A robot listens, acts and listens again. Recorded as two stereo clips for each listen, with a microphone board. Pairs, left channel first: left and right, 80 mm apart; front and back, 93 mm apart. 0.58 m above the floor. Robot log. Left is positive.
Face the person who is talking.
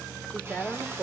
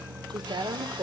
note: The woman speaking: 165° left.
cmd yaw +165
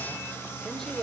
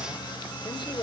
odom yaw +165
note: The woman speaking is now 10° left.
cmd yaw +10
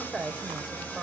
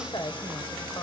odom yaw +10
end: Found it: a woman speaking, straight ahead.